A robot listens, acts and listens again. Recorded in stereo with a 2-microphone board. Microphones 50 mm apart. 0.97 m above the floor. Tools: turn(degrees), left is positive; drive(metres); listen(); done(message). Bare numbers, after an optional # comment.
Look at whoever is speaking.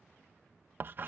listen()
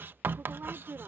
# The woman speaking: about 50° right or 130° right.
turn(-50)
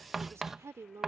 # So it is at 80° right.
turn(-80)
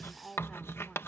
done("Facing the woman speaking.")